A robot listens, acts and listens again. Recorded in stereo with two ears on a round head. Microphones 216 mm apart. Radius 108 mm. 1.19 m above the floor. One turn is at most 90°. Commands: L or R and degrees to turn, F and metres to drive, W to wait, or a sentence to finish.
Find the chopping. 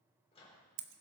W
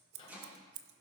R30
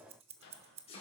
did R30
L25
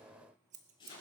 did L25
L20
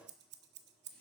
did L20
W
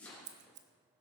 Facing the chopping, over 4 m away.